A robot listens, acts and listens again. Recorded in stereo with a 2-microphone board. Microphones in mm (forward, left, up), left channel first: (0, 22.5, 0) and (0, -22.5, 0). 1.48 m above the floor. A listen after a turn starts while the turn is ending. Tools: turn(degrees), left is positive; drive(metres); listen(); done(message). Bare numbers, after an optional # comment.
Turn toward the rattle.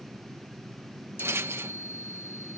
# The rattle: about 70° right or 110° right.
turn(-70)
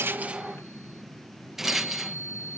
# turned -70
# So it is at 10° right.
turn(-10)
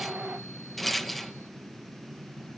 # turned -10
done("Facing the rattle.")